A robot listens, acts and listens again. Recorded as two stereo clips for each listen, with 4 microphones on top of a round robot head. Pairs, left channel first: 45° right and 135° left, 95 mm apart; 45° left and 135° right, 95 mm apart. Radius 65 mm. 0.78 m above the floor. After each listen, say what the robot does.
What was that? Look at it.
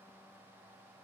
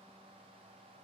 Keep listening.
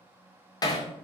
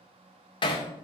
Found it: hammering, straight ahead, 2 to 4 m away.